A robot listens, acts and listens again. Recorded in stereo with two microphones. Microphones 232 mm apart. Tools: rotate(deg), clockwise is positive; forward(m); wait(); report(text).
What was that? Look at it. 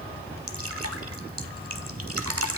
rotate(90)
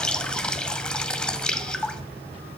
report("Facing the dripping, under 1 m away.")